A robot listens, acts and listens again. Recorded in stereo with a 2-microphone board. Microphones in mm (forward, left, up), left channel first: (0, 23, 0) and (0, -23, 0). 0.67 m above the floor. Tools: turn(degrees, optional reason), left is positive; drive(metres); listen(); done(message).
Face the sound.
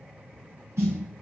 turn(degrees=-70, reason="The snare drum: about 70° right or 110° right.")
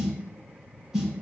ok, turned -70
turn(degrees=-10, reason="So it is at 10° right.")
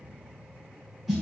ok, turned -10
done("Found it: a snare drum, straight ahead.")